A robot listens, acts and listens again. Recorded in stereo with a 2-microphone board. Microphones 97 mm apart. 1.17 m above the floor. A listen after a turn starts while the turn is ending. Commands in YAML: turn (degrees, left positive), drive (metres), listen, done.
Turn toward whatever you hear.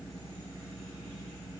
listen: true
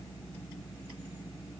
listen: true
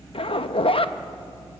turn: 65
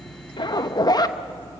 turn: 45
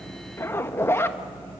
turn: 25
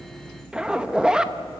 turn: -10
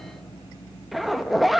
done: "Found it: a zipper, straight ahead, under 1 m away."